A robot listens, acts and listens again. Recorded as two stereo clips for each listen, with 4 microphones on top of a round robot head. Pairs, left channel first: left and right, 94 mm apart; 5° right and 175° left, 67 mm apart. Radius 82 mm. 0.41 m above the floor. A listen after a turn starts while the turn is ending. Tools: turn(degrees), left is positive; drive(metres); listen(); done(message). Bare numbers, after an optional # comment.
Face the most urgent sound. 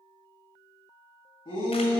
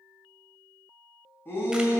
# The shout: 50° left.
turn(50)
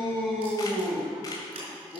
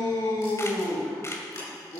done("Facing the shout.")